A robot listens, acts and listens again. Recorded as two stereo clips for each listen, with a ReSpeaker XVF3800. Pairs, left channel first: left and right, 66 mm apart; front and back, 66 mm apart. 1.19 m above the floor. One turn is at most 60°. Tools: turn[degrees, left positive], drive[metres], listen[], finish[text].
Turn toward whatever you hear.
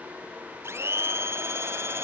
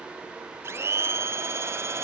Thought: The blender: 135° right.
Action: turn[-60]
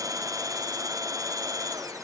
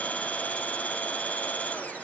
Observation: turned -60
Thought: The blender is now 70° right.
Action: turn[-60]
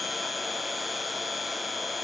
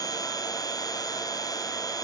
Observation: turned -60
Action: finish[Facing the blender.]